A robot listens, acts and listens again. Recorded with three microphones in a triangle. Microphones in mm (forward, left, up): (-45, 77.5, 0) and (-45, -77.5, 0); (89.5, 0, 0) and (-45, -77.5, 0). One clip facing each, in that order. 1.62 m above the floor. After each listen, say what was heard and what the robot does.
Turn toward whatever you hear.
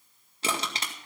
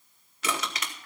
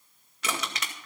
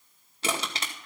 The crushing: 150° left. Turn 150° left.
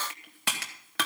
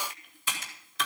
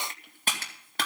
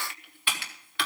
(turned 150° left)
The crushing is now 75° left. Turn 75° left.
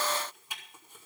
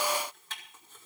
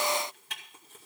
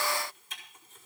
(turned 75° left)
The crushing is now 15° left. Turn 15° left.
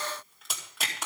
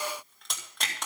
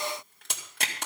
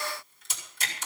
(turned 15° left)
Found it: crushing, straight ahead, 2 to 4 m away.